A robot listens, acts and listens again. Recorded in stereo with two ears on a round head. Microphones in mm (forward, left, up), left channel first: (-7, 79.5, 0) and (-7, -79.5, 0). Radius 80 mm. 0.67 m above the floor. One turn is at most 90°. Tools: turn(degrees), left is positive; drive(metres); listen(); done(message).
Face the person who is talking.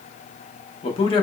turn(degrees=30)
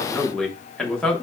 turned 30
done("Found it: a man speaking, straight ahead.")